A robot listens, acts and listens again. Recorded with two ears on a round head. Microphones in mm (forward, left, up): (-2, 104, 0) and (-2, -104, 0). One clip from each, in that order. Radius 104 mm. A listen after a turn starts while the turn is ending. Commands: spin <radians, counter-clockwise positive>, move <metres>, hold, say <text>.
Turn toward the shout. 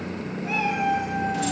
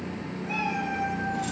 hold
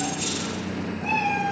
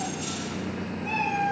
hold
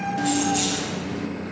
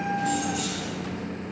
say I can't make out a shout, only a cat meowing and keys jangling.